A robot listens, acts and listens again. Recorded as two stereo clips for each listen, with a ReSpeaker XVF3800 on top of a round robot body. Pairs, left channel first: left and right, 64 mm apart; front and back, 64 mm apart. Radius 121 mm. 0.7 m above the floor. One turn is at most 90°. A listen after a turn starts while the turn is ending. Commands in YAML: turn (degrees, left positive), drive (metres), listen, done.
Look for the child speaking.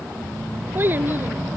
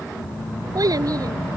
turn: -90
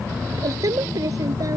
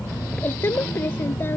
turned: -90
turn: -55
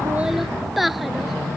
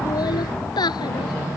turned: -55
done: "Found it: a child speaking, straight ahead."